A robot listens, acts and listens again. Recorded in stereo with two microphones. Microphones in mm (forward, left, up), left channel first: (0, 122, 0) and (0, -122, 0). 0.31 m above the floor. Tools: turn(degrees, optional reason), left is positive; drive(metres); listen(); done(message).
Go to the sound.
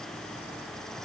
listen()
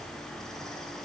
listen()
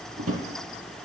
turn(degrees=-70, reason="The drawer: about 70° right or 110° right.")
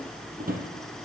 turn(degrees=-35, reason="So it is at 35° right.")
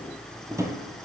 turn(degrees=-10, reason="The drawer is now 10° right.")
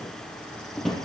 drive(metres=1.0)
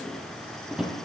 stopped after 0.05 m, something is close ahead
done("Something is in my way. I am facing the drawer but have not reached it.")